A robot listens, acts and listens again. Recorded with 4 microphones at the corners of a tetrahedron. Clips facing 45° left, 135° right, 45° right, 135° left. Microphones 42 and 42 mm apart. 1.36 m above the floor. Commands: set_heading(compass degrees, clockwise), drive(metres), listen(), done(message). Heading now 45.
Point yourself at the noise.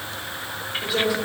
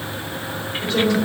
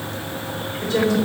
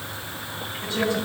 set_heading(80)
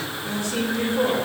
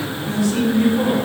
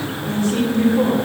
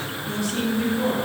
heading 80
done("Facing the woman speaking.")